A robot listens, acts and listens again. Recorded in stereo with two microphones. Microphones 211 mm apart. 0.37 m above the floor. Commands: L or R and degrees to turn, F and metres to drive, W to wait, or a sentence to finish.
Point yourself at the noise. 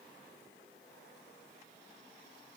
W
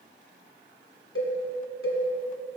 L90
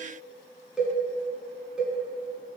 Facing the cowbell, 1 to 2 m away.